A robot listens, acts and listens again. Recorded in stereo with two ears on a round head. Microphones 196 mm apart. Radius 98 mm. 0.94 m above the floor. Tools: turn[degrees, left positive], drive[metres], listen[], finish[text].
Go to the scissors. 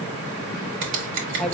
Thought: The scissors: about 60° right or 120° right.
Action: turn[-60]
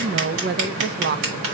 Thought: So it is at 60° right.
Action: turn[-60]
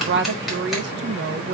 Action: drive[1.0]
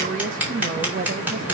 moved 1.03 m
Thought: The scissors is now 10° right.
Action: turn[-10]
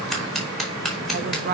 Action: drive[1.0]
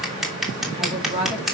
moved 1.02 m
Action: drive[1.0]
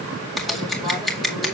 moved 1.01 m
Action: drive[1.0]
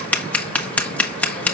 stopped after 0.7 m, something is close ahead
Action: finish[I am next to the scissors.]